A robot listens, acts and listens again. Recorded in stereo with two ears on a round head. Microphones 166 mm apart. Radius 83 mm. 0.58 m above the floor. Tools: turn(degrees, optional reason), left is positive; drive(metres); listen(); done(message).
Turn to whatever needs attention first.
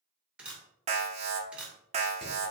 turn(degrees=-35, reason="The alarm: about 35° right or 145° right.")
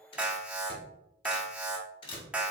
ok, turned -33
turn(degrees=-10, reason="So it is at 10° right.")
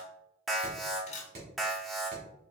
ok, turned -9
done("Facing the alarm.")